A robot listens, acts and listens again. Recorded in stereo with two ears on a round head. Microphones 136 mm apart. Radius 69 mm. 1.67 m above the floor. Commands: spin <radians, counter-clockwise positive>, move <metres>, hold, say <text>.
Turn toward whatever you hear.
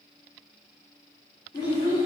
spin 0.52
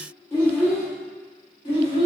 spin 0.61
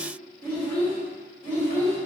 spin 0.35
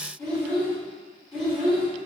say Found it: a child speaking, straight ahead, 2 to 4 m away.